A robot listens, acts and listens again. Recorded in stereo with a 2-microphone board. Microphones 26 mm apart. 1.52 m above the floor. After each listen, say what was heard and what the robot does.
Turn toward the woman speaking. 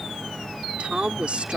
The woman speaking: about 50° right or 130° right. Turn 50° right.
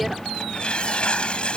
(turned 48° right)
Keep listening.
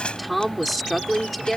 Found it: a woman speaking, straight ahead.